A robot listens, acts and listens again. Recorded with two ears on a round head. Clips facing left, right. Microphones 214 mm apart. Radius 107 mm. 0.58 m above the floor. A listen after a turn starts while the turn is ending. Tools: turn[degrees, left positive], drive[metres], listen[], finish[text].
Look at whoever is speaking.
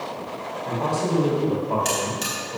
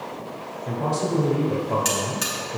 Action: turn[-30]
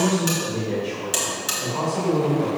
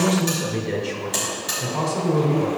Thought: So it is at 140° right.
Action: turn[-140]
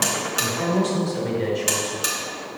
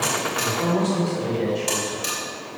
Action: finish[Found it: a man speaking, straight ahead, 2 to 4 m away.]